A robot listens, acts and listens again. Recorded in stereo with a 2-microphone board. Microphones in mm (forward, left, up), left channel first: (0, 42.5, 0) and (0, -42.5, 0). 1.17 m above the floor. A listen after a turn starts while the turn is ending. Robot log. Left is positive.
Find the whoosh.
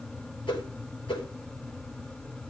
note: The whoosh: about 75° left or 105° left.
cmd yaw +75
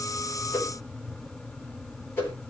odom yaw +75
note: So it is at 30° left.
cmd yaw +30
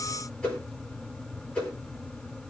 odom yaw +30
note: The whoosh is now 15° left.
cmd yaw +15
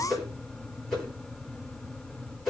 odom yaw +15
end: Facing the whoosh.